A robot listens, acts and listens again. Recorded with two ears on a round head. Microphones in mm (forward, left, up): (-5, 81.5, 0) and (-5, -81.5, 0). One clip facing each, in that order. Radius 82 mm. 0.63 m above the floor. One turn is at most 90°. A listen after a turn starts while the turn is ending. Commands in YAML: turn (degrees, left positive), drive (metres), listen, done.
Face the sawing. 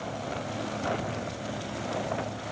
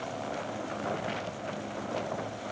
listen: true
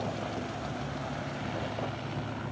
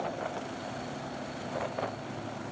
listen: true
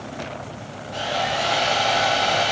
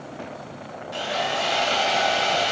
turn: -60
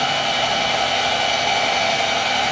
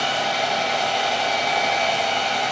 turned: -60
done: "Found it: sawing, straight ahead."